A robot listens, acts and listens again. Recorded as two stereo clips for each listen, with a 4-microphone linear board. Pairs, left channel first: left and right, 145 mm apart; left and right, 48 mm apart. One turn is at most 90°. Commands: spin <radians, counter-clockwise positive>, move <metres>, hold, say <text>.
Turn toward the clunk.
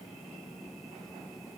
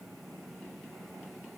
hold
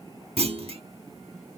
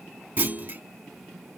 spin -0.79
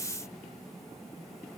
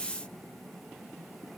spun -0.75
hold
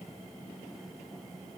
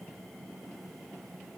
say I heard a clunk, but can't make it out now. It was about straight ahead or 95° right.